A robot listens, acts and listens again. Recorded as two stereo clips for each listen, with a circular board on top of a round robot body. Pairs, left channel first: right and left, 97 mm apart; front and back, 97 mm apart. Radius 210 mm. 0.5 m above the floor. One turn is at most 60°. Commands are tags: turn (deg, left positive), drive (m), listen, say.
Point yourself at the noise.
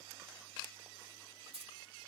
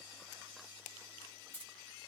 <turn deg="60"/>
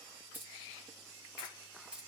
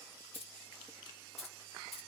<turn deg="10"/>
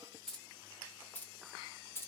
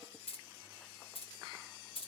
<turn deg="-25"/>
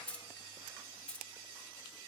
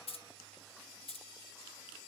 <turn deg="-10"/>
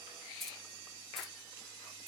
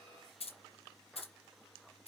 <say>Found it: keys jangling, straight ahead, 1 to 2 m away.</say>